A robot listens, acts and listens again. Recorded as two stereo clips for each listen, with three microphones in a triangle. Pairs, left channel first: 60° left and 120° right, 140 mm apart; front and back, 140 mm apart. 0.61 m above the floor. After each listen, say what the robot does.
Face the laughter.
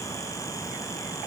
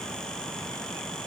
Keep listening.
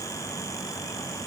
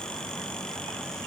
Keep listening.
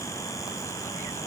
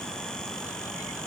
I can't make out laughter to turn to.